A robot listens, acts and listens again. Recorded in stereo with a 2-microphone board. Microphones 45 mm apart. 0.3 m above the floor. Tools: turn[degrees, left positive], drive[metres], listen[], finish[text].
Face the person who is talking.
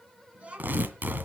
Thought: The child speaking: about 30° right or 150° right.
Action: turn[-30]
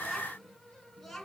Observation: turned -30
Action: finish[Facing the child speaking.]